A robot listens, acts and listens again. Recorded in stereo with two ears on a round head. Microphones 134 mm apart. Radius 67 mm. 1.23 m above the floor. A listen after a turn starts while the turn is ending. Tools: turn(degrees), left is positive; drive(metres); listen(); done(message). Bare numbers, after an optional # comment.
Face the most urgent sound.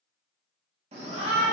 # The shout: about 45° right or 135° right.
turn(-45)
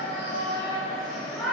done("Found it: a shout, straight ahead.")